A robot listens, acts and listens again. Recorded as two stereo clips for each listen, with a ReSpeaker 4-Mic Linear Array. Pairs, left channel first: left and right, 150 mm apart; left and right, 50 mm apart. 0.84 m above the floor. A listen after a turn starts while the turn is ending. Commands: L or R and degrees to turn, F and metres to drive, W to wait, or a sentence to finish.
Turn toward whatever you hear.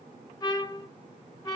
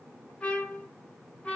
L25
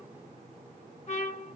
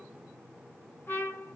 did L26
L130
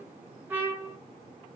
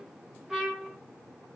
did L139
R10
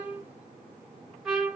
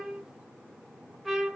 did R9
Found it: a trumpet, straight ahead.